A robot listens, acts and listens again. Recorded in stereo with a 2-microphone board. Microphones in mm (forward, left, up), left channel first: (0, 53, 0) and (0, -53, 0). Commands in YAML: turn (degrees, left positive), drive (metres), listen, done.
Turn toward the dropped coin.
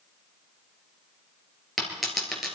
turn: 30
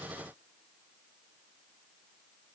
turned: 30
listen: true
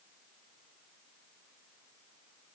done: "I heard a dropped coin, but can't make it out now. It was about 30° right or 150° left."